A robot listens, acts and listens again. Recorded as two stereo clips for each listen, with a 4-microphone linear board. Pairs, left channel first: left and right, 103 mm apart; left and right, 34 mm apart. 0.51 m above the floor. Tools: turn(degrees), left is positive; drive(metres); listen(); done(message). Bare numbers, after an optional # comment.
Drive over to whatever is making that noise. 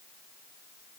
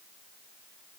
listen()
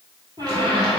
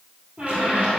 # The squeak: about 40° right or 140° right.
turn(-40)
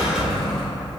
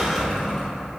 drive(1.0)
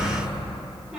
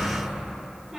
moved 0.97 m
# The squeak is now 10° right.
turn(-10)
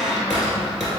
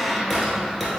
drive(1.0)
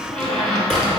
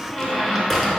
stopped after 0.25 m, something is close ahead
done("Arrived at the squeak, straight ahead.")